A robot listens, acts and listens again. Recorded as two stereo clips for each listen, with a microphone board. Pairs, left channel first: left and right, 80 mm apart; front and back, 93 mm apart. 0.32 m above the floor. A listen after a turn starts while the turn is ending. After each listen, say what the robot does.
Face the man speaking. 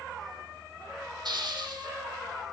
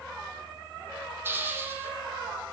Keep listening.
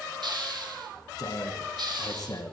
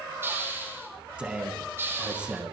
Turn 105° left.
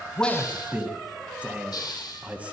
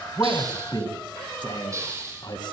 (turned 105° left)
Turn 20° right.
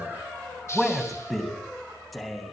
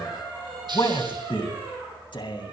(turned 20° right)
Found it: a man speaking, straight ahead, 2 to 4 m away.